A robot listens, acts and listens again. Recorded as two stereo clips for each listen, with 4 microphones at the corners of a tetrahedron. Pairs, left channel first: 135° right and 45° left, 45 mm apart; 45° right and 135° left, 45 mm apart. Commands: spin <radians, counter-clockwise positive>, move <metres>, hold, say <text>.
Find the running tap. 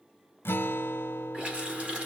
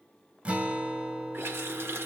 spin 1.92
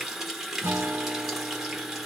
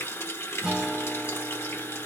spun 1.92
spin -0.61
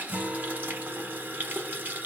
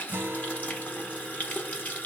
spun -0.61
say Found it: a running tap, straight ahead, 1 to 2 m away.